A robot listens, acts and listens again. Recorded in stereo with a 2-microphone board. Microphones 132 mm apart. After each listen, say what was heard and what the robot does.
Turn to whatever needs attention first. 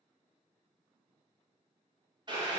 Keep listening.
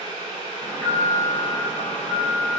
The alarm: about 30° left or 150° left. Turn 30° left.
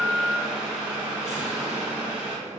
So it is at 125° left. Turn 125° left.
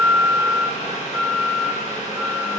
The alarm is now 45° left. Turn 45° left.
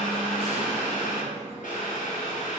The alarm is now 20° left. Turn 20° left.
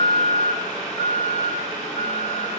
Found it: an alarm, straight ahead, 1 to 2 m away.